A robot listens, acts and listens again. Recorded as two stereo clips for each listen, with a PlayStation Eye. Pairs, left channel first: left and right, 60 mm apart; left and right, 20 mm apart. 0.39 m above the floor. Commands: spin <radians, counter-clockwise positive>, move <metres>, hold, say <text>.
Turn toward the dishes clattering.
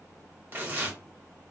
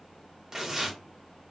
hold
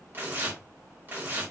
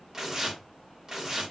hold
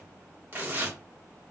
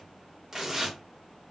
say I can't make out dishes clattering, only tearing paper.